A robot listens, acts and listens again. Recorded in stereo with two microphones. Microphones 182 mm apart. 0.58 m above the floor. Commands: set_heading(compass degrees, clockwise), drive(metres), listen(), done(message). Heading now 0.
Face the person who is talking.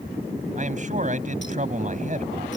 set_heading(45)
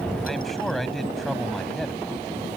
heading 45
done("Found it: a man speaking, straight ahead.")